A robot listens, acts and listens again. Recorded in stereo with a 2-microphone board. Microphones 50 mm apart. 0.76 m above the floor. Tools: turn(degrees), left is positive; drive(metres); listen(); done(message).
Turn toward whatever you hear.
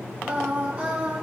turn(degrees=-25)
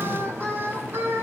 turn(degrees=-135)
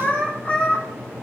turn(degrees=25)
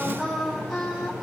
done("Found it: singing, straight ahead.")